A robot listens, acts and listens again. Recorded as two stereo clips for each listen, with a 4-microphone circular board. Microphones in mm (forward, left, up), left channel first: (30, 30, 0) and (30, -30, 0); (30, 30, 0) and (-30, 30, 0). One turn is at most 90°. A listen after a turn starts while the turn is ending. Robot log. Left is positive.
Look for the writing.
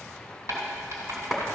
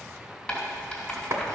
note: The writing: 80° right.
cmd yaw -80
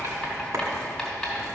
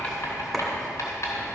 end: Found it: writing, straight ahead.